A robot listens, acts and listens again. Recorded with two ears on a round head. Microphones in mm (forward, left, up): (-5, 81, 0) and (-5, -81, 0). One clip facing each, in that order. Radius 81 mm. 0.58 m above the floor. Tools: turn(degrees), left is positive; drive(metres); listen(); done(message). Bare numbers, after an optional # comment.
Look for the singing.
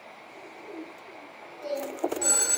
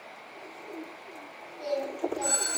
# The singing: about 65° right or 115° right.
turn(-65)
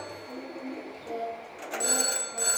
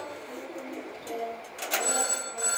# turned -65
done("Facing the singing, 2 to 4 m away.")